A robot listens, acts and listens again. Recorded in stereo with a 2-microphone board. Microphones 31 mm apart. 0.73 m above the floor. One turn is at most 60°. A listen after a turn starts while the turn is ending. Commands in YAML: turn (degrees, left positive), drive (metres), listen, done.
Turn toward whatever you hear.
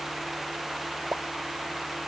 turn: -60
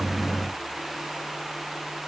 turn: -30
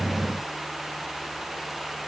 done: "I heard a pop from this way, but can't make it out now."